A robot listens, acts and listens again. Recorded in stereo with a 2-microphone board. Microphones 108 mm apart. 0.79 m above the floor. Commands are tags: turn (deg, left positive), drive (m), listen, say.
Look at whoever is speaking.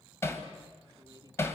<turn deg="-35"/>
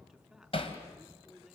<say>Found it: a man speaking, straight ahead.</say>